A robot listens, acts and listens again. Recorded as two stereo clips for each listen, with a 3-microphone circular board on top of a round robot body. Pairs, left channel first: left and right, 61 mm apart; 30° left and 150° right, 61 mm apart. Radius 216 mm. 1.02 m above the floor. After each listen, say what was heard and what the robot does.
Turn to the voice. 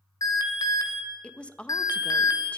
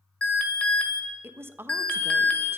The woman speaking: 160° left. Turn 160° left.
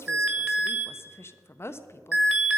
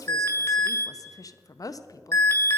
The woman speaking is now 45° left. Turn 45° left.
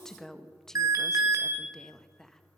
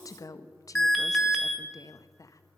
The woman speaking is now 10° left. Turn 10° left.
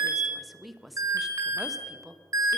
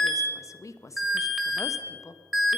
Found it: a woman speaking, straight ahead.